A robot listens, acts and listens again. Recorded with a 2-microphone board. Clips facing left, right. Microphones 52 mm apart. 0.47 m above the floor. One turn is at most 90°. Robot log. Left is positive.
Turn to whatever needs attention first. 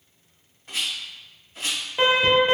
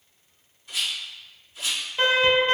cmd yaw +30
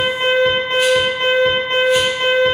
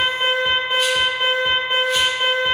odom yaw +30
note: So it is at 15° right.
cmd yaw -15
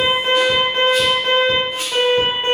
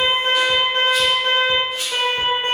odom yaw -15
end: Found it: an alarm, straight ahead.